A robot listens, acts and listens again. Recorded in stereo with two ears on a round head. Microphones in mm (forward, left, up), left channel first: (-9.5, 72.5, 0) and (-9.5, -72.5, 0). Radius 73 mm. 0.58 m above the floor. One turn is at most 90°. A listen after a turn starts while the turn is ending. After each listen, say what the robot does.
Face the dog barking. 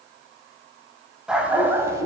Turn 20° right.
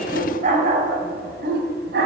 Turn 90° right.
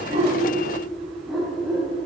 Found it: a dog barking, straight ahead.